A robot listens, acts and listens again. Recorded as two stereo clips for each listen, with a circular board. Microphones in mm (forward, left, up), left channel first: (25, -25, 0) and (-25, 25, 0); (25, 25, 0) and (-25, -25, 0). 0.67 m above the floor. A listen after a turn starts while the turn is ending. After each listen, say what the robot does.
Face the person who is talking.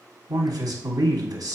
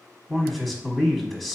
Turn 125° left.
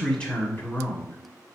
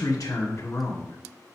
Found it: a man speaking, straight ahead.